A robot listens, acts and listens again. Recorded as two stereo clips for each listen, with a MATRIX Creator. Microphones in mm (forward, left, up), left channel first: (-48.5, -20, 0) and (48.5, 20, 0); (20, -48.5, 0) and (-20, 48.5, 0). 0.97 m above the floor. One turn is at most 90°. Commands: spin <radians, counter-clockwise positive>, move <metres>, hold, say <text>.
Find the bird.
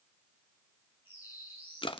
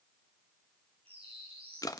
spin 1.57
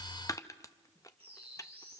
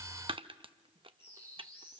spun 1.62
say Found it: a bird, straight ahead.